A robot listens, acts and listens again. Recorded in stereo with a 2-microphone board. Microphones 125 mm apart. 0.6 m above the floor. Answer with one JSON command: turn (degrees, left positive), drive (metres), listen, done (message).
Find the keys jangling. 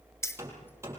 {"turn": 20}
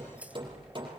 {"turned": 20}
{"listen": true}
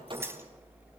{"turn": -20}
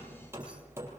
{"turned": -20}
{"listen": true}
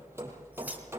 {"listen": true}
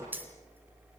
{"turn": -15}
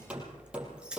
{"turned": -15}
{"turn": -10}
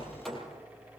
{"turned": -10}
{"listen": true}
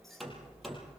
{"listen": true}
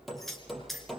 {"done": "Found it: keys jangling, straight ahead."}